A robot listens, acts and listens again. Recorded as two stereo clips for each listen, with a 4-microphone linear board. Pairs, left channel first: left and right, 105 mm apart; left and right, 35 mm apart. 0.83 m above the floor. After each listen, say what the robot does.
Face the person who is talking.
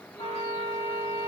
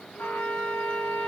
Keep listening.
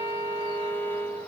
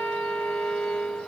Keep listening.
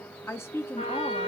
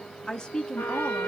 Turn 25° left.
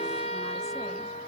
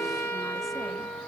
Keep listening.
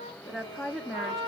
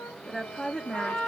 Facing the woman speaking, under 1 m away.